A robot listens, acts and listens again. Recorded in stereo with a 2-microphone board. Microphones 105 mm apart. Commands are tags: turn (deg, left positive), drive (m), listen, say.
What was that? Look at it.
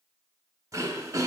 <turn deg="-30"/>
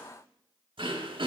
<turn deg="-115"/>
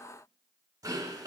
<turn deg="-40"/>
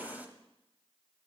<turn deg="-15"/>
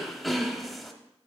<say>Facing the throat clearing, under 1 m away.</say>